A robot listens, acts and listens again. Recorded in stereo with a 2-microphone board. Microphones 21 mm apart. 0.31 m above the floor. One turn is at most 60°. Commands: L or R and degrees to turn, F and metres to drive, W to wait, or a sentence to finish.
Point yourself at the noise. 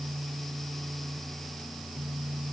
W
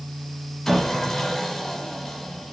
L30
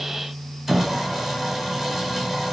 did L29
R15
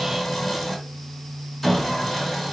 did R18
Facing the sawing, 1 to 2 m away.